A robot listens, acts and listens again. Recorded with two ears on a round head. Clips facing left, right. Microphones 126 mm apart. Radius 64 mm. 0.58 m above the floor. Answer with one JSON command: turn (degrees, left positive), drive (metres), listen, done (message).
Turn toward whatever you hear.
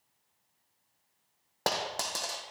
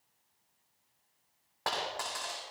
{"turn": 45}
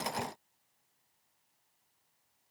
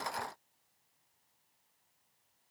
{"listen": true}
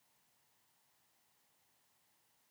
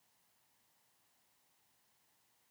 {"done": "I heard a dropped coin, but can't make it out now. It was about straight ahead or 90° left."}